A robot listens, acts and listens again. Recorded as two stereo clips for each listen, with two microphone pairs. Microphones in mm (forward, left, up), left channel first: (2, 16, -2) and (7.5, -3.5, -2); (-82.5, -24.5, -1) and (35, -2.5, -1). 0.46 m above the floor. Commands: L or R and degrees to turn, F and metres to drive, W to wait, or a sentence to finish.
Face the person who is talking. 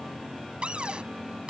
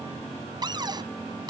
W
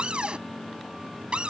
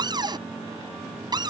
W
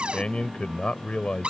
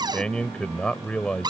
L110
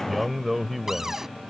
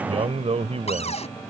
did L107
Facing the man speaking.